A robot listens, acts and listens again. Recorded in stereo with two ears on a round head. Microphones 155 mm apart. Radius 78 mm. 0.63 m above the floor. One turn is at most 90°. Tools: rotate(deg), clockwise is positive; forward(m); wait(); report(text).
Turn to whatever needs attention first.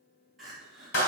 rotate(-30)
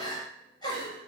rotate(-90)
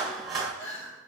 rotate(-70)
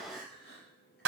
wait()
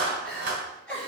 report("Facing the crying, 2 to 4 m away.")